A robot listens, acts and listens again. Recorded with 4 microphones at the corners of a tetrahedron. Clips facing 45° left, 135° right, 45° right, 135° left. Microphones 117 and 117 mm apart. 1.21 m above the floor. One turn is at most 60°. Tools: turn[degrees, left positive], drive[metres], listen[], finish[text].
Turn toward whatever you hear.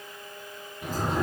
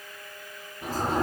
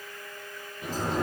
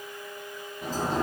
Thought: The sliding door: 170° left.
Action: turn[60]
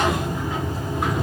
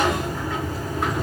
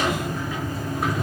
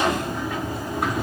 Thought: The sliding door is now 115° left.
Action: turn[60]
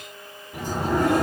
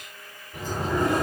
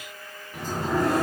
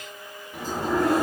Thought: The sliding door is now 50° left.
Action: turn[50]
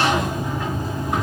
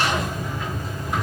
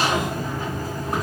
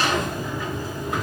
Thought: The sliding door is now 10° left.
Action: turn[10]
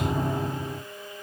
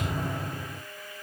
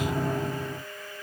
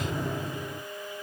Action: finish[Found it: a sliding door, straight ahead.]